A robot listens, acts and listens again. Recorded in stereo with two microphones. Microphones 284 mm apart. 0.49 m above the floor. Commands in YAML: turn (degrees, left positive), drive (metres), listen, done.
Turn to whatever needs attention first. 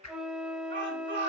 turn: -40
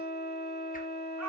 listen: true
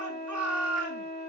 turn: -100
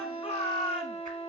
turn: 20
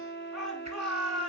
done: "Facing the shout."